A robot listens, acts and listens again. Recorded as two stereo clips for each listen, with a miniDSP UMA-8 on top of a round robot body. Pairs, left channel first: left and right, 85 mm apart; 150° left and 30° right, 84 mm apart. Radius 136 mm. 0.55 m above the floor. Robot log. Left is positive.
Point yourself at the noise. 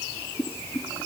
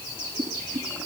note: The boiling: 25° left.
cmd yaw +25
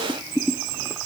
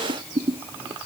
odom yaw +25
end: Found it: boiling, straight ahead.